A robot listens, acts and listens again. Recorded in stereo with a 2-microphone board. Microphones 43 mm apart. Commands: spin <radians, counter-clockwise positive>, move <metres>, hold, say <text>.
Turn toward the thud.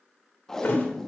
spin 0.87
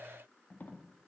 hold
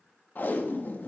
say I heard a thud, but can't make it out now. It was about straight ahead or 80° left.